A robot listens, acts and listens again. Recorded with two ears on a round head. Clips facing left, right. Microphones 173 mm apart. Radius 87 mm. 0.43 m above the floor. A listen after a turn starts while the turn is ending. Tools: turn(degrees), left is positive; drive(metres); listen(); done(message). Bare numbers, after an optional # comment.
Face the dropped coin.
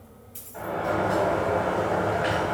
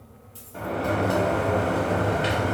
# The dropped coin: about 25° left or 155° left.
turn(25)
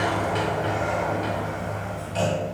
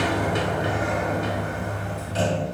listen()
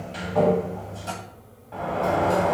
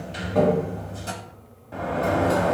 done("I heard a dropped coin, but can't make it out now. It was about straight ahead or 130° left.")